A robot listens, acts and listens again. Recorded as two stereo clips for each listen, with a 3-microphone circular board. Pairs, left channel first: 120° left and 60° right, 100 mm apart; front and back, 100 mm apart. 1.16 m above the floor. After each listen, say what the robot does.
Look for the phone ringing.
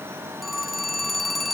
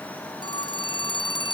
Turn 30° left.
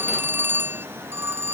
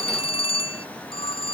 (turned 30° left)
Facing the phone ringing.